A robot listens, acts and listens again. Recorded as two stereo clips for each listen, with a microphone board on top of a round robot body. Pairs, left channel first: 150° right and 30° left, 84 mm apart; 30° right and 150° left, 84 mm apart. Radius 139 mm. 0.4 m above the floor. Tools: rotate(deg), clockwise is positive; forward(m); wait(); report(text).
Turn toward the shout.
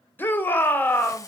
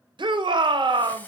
rotate(-145)
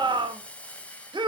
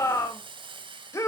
rotate(-20)
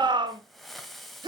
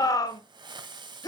report("Facing the shout, 1 to 2 m away.")